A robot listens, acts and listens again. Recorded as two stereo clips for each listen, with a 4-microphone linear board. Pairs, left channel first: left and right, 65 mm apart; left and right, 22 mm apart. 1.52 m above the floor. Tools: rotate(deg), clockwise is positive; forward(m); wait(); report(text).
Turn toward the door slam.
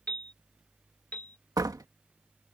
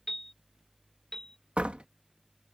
rotate(70)
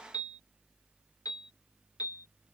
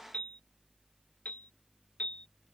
wait()
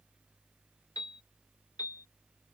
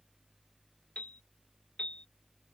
report("I heard a door slam, but can't make it out now. It was about straight ahead or 40° right.")